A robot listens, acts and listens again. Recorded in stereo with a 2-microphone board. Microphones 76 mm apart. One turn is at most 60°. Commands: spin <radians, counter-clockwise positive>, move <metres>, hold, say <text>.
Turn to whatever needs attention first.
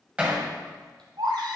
spin -1.05
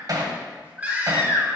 spin -0.44
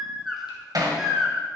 say Found it: a baby crying, straight ahead, 2 to 4 m away.